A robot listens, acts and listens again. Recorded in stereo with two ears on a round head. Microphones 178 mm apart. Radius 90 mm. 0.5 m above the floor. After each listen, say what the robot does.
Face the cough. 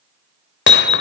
Keep listening.
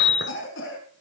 Turn 75° left.
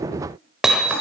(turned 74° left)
Keep listening.
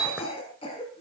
Turn 30° left.
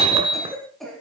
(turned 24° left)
Facing the cough, over 4 m away.